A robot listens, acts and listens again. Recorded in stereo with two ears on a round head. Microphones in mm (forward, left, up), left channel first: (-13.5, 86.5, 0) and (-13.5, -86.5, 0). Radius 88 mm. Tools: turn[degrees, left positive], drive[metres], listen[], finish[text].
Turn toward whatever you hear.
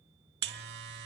Thought: The buzzer: about 55° right or 125° right.
Action: turn[-55]
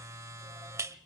Thought: So it is at 20° right.
Action: turn[-20]
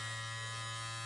Action: finish[Facing the buzzer, under 1 m away.]